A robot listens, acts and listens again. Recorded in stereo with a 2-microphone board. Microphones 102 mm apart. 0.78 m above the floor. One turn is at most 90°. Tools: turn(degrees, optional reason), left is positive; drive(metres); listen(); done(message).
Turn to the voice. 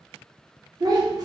turn(degrees=-40, reason="The child speaking: about 40° right or 140° right.")
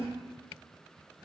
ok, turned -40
listen()
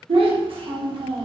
turn(degrees=-90, reason="So it is at 95° right.")
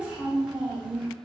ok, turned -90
turn(degrees=-10, reason="The child speaking is now 10° right.")
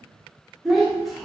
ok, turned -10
done("Found it: a child speaking, straight ahead.")